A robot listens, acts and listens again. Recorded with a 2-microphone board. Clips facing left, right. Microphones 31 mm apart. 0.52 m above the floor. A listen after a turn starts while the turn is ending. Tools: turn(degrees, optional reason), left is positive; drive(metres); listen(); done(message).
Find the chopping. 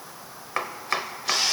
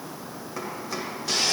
turn(degrees=70, reason="The chopping: about 70° left or 110° left.")
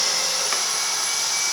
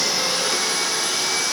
listen()
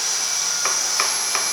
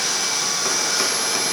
turn(degrees=35, reason="So it is at 35° left.")
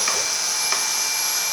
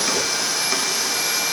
listen()
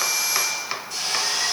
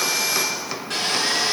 turn(degrees=20, reason="The chopping is now 20° left.")
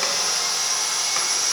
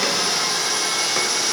listen()
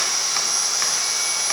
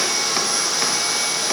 listen()
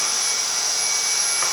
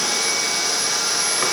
done("I heard chopping from this way, but can't make it out now.")